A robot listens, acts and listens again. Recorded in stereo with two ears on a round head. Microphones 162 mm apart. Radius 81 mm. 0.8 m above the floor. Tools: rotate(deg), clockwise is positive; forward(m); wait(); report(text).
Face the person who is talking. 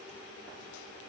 wait()
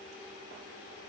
wait()
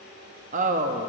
rotate(45)
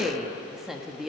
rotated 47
report("Found it: a woman speaking, straight ahead.")